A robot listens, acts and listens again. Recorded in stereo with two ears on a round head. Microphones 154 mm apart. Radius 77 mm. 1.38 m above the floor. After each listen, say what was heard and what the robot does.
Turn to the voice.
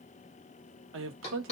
Turn 90° right.
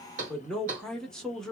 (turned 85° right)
Found it: a man speaking, straight ahead.